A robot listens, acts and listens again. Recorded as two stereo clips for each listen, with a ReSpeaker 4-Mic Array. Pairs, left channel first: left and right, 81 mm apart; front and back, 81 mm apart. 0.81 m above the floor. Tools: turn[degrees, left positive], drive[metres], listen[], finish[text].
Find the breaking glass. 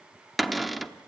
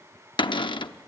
Action: listen[]
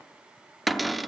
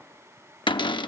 Action: listen[]
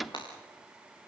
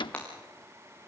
Thought: The breaking glass: 75° left.
Action: turn[75]
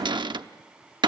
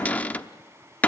Action: finish[I heard breaking glass from this way, but can't make it out now.]